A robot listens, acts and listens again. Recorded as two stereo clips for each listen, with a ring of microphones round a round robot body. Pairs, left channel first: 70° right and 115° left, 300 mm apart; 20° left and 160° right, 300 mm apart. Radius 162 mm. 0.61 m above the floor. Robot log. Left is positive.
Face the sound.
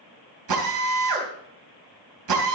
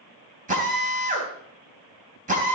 note: The drill: 135° left.
cmd yaw +135
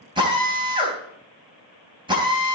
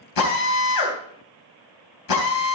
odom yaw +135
note: The drill is now 35° left.
cmd yaw +35
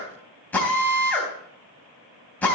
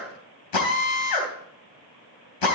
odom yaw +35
note: The drill is now 15° left.
cmd yaw +15
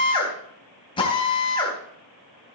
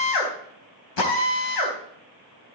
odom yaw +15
end: Facing the drill.